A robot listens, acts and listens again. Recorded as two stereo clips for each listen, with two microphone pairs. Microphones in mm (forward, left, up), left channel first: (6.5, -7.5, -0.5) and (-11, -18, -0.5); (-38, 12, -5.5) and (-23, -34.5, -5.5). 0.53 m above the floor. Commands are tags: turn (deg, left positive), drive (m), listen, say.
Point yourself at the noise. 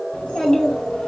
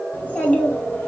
<turn deg="55"/>
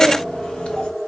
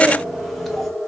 <turn deg="20"/>
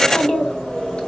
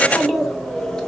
<turn deg="30"/>
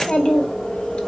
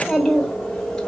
<turn deg="25"/>
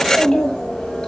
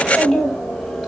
<turn deg="10"/>
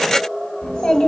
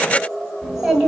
<say>Facing the child speaking.</say>